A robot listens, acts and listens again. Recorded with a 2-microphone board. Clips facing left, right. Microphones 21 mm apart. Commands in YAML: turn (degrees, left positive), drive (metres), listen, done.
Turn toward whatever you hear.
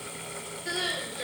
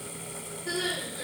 turn: 50
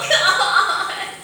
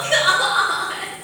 turn: 80
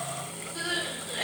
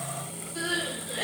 turn: 10
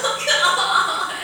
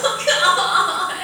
done: "Found it: crying, straight ahead."